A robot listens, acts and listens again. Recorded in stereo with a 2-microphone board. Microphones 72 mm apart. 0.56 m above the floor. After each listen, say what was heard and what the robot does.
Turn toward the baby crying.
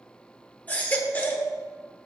The baby crying: about 25° left or 155° left. Turn 25° left.
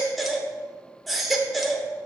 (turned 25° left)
Facing the baby crying.